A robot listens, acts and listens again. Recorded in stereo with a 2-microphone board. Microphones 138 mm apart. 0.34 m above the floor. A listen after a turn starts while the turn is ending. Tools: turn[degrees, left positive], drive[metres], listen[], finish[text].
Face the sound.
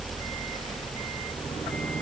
Action: listen[]
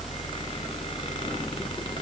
Action: listen[]
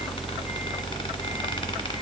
Action: finish[I can't make out anything to turn to.]